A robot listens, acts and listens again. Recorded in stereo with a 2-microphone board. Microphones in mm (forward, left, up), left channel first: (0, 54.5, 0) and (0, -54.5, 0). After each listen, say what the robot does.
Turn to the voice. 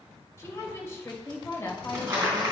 Turn 25° left.
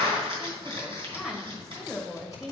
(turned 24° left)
Found it: a woman speaking, straight ahead, 2 to 4 m away.